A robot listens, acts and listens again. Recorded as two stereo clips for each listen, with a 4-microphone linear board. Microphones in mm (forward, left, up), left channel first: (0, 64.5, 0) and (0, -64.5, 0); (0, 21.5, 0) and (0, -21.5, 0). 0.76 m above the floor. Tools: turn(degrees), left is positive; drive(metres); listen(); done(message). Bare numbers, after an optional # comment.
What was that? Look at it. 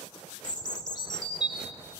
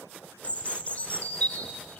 # The bird: about 35° left or 145° left.
turn(35)
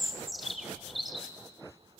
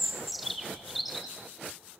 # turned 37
done("Found it: a bird, straight ahead, 1 to 2 m away.")